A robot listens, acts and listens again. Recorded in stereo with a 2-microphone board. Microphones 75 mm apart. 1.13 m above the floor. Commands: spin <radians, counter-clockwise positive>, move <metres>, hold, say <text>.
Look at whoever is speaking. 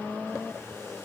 hold
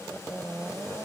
hold
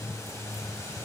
say I can't make out anyone speaking.